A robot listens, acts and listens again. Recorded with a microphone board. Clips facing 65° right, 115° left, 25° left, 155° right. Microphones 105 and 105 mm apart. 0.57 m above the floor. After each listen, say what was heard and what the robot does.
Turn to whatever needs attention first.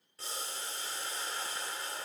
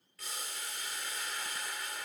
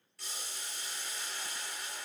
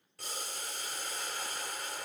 Keep listening.
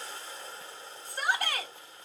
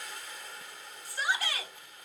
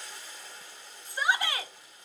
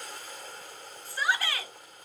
The shout: 45° right. Turn 45° right.
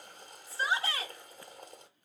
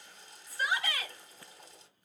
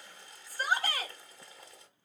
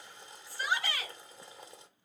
The shout is now 15° right. Turn 15° right.
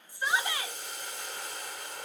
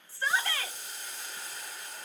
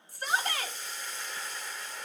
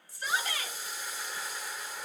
Facing the shout.